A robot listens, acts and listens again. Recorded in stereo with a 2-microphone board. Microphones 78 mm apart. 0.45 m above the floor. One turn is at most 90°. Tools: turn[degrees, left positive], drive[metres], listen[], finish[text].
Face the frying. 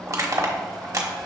Action: listen[]
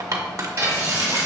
Thought: The frying: about 40° right or 140° right.
Action: turn[-40]
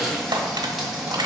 Action: finish[Found it: frying, straight ahead, 1 to 2 m away.]